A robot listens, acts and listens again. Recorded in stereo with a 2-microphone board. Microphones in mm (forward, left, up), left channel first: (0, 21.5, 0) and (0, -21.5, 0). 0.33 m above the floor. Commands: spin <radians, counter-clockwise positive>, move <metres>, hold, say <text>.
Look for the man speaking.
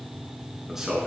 spin -0.52
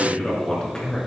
spin 0.35
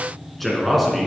say Found it: a man speaking, straight ahead.